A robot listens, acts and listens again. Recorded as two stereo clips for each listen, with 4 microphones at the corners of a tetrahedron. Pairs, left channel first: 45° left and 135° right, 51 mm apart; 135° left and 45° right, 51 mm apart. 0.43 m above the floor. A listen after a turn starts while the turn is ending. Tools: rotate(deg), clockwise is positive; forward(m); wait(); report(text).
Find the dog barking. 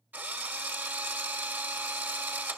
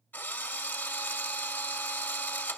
wait()
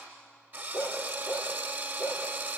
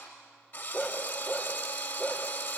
rotate(-25)
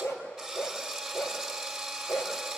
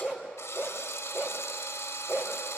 report("Facing the dog barking.")